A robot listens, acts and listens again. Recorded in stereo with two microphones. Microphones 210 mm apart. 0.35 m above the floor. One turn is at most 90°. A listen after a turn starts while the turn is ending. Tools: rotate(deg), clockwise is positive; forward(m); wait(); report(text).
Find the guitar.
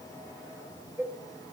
wait()
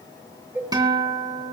rotate(20)
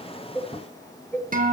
rotate(90)
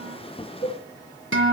rotate(80)
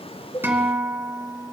rotate(10)
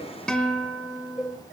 report("Found it: a guitar, straight ahead.")